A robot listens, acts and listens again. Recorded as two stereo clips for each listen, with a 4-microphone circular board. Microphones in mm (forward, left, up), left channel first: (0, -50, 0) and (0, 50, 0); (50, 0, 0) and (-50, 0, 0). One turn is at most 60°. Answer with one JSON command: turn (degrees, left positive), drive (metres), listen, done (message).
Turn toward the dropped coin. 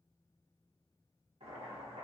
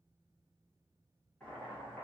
{"listen": true}
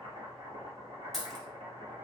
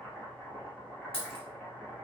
{"done": "Found it: a dropped coin, straight ahead."}